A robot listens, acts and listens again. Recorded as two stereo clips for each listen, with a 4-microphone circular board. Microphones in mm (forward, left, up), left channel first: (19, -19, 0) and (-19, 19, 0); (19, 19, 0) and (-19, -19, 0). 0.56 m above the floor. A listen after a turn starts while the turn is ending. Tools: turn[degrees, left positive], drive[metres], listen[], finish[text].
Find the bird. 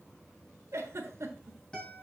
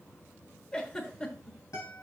Action: listen[]
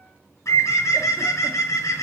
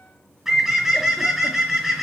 Thought: The bird: 55° right.
Action: turn[-55]
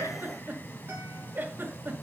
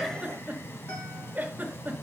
Action: listen[]
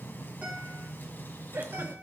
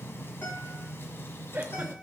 Action: listen[]
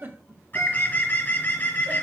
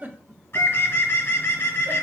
Action: finish[Found it: a bird, straight ahead.]